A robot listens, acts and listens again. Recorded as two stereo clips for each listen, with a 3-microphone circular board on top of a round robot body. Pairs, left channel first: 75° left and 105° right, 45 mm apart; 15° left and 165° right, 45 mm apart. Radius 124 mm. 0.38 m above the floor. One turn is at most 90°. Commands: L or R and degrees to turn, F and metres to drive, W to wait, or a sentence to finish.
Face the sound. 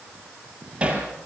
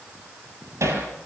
R90
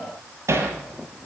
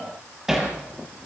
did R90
R80
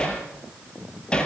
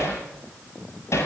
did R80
Facing the hammering, over 4 m away.